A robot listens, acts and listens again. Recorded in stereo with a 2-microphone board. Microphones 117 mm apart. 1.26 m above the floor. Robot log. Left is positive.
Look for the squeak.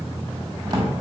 cmd idle
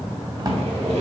note: The squeak: about 60° right or 120° right.
cmd yaw -60
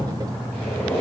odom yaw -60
note: So it is at 10° left.
cmd yaw +10
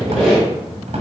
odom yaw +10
end: Found it: a squeak, straight ahead.